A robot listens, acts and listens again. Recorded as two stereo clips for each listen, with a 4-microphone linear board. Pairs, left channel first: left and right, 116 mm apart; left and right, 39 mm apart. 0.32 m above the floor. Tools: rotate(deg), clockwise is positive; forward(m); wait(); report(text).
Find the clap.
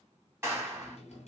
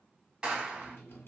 rotate(20)
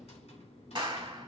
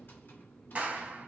rotate(135)
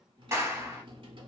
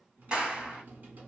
rotate(25)
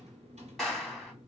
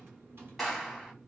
report("Facing the clap, 1 to 2 m away.")